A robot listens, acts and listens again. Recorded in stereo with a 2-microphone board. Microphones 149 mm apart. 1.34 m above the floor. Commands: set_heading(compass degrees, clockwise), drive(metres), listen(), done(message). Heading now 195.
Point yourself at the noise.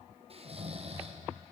set_heading(240)
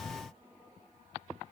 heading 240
listen()
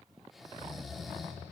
done("Found it: snoring, straight ahead, under 1 m away.")